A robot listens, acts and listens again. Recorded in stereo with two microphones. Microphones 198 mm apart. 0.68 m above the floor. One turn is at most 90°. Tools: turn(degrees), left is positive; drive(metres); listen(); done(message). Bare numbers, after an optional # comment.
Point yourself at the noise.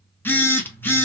turn(30)
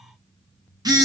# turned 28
# So it is at 20° right.
turn(-20)
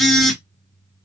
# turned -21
done("Found it: a phone buzzing, straight ahead.")